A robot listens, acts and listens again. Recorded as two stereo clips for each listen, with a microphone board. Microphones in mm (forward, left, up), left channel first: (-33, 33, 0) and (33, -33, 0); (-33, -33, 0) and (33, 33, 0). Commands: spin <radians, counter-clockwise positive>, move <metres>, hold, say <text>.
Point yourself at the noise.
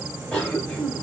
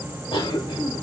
spin -2.62
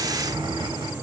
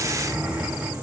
spin -0.52
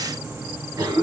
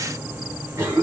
spin -0.17
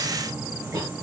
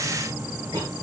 say Facing the cough, 1 to 2 m away.